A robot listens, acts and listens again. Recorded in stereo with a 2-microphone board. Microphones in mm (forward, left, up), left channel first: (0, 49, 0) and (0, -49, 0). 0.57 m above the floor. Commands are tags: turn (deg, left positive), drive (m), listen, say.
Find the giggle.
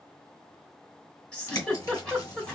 <turn deg="30"/>
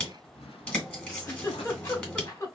<turn deg="145"/>
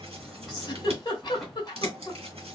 <turn deg="50"/>
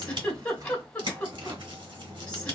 <turn deg="10"/>
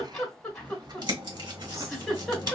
<say>Facing the giggle.</say>